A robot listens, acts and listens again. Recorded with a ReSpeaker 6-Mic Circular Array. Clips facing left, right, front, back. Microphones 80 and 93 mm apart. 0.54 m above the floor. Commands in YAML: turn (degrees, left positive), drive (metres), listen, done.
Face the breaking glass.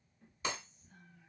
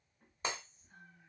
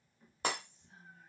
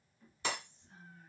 turn: -35
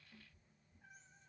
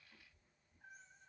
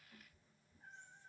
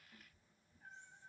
done: "Facing where the breaking glass came from. I can't hear it now."